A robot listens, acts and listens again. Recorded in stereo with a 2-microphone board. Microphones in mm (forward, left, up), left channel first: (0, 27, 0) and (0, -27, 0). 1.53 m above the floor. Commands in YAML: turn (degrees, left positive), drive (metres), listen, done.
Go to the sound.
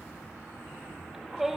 turn: -30
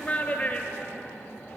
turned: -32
turn: 30
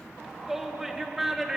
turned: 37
drive: 1.0
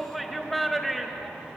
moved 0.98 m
drive: 1.0
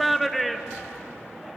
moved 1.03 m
drive: 1.0
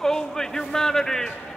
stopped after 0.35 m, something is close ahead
turn: 10
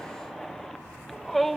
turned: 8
done: "Arrived at the shout, straight ahead."